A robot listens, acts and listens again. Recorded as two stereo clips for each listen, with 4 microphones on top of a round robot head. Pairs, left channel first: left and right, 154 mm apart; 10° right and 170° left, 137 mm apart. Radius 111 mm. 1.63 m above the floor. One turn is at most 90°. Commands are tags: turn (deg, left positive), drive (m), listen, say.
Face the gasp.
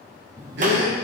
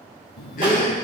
<turn deg="-60"/>
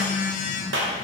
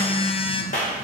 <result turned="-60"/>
<say>Facing where the gasp came from. I can't hear it now.</say>